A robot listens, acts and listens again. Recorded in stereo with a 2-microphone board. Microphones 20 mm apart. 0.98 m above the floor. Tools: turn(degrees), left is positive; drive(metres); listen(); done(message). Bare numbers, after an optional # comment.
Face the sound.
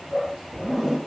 # The zipper: about 15° right or 165° right.
turn(-15)
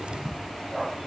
listen()
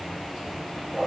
listen()
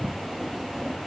done("I heard a zipper, but can't make it out now. It was about straight ahead or 150° right.")